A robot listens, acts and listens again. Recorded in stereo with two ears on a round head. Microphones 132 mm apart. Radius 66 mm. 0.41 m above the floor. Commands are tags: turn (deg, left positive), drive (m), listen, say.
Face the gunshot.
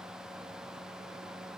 <listen/>
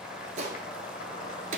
<turn deg="-55"/>
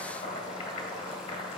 <listen/>
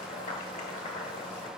<say>I heard a gunshot, but can't make it out now. It was about straight ahead or 70° right.</say>